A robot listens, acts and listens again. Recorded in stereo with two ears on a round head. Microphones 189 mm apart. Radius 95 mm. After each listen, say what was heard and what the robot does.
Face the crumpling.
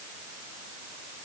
Keep listening.
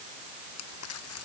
Turn 90° left.
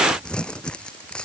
Facing the crumpling.